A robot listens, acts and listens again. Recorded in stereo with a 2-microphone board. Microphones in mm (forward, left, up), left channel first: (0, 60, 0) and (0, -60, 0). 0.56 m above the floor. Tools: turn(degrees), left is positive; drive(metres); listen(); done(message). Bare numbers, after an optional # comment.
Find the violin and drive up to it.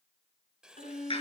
turn(90)
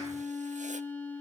# So it is at 15° left.
turn(15)
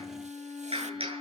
drive(1.0)
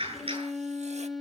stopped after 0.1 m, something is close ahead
done("Blocked. The violin is further on, straight ahead.")